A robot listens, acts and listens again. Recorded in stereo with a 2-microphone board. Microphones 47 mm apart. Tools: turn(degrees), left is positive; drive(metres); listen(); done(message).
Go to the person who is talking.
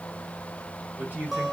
turn(degrees=-40)
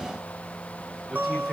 listen()
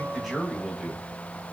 drive(metres=1.0)
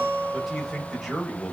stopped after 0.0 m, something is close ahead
done("Something is in my way. I am facing the man speaking but have not reached it.")